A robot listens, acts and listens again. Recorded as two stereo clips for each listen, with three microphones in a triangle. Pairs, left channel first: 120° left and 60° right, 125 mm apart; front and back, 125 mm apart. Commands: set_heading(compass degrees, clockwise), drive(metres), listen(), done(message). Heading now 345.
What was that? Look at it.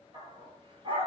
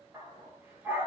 set_heading(90)
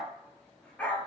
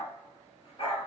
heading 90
set_heading(50)
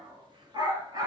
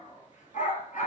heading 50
done("Found it: a dog barking, straight ahead.")